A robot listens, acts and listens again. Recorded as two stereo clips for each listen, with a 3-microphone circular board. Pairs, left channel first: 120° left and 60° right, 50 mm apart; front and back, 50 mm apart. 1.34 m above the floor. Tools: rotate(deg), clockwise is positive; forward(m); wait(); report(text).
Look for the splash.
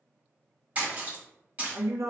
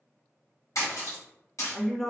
report("Found it: a splash, straight ahead, 1 to 2 m away.")